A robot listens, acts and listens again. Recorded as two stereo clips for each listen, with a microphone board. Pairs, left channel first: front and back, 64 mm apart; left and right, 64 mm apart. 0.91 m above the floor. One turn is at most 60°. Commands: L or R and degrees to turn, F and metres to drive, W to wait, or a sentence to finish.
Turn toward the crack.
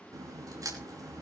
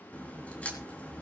L60
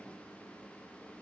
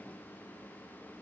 L60
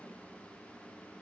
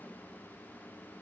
L40
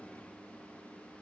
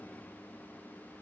I heard a crack from this way, but can't make it out now.